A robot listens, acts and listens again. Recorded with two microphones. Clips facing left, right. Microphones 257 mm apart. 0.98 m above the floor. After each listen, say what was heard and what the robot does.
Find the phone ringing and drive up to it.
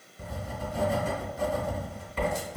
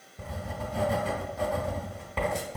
Keep listening.
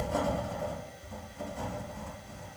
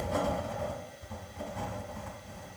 Keep listening.
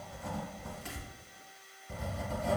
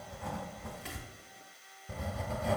I can't make out a phone ringing to turn to.